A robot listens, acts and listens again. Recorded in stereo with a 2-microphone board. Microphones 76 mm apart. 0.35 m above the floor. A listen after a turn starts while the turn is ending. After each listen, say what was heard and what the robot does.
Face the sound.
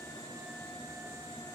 Keep listening.
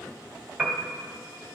Turn 30° right.
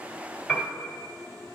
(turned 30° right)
So it is at 20° left. Turn 20° left.
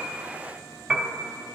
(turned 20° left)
Found it: a piano, straight ahead, 1 to 2 m away.